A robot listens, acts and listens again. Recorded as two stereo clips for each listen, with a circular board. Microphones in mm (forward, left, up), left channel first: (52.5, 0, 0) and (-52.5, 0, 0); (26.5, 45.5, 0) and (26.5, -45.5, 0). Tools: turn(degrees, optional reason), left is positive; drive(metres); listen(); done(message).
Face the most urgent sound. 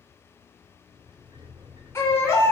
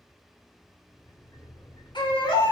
turn(degrees=65, reason="The baby crying: 65° left.")
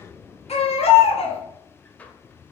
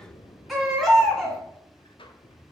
done("Found it: a baby crying, straight ahead.")